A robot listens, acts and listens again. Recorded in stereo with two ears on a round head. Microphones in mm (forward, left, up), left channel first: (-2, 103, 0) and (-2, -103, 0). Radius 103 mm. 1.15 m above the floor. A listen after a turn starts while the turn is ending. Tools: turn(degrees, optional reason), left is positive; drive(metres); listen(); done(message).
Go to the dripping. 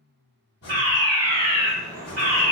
turn(degrees=-25, reason="The dripping: about 25° right or 155° right.")
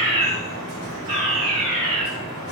turn(degrees=-130, reason="So it is at 130° right.")
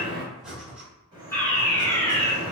turn(degrees=-20, reason="The dripping is now 20° right.")
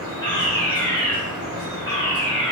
turn(degrees=-10, reason="The dripping is now 10° right.")
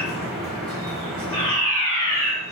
drive(metres=1.0)
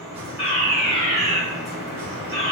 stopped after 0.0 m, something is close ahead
done("Something is in my way. I am facing the dripping but have not reached it.")